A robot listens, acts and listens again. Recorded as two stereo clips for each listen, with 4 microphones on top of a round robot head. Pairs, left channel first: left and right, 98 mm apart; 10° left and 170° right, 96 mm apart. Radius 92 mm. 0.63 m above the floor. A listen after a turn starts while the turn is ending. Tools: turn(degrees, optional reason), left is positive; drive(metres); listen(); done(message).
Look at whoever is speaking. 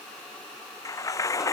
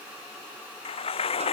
listen()
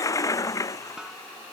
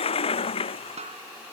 listen()
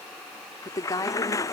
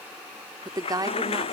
turn(degrees=145, reason="The woman speaking: 145° left.")
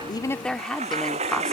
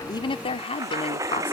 done("Facing the woman speaking.")